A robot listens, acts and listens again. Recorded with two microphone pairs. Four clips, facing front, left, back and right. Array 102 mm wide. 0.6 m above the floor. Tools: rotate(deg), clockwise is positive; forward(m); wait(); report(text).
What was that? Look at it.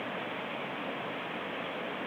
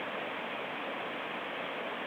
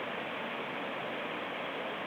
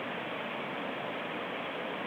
wait()
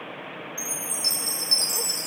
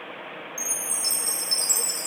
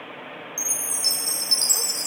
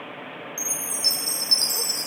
rotate(175)
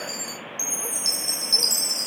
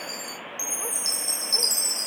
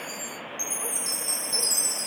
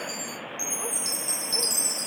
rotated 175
rotate(45)
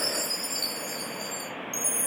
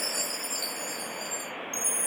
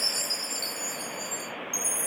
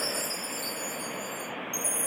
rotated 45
rotate(10)
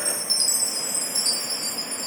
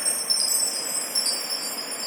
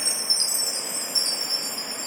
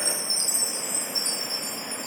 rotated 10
report("Found it: a chime, straight ahead, under 1 m away.")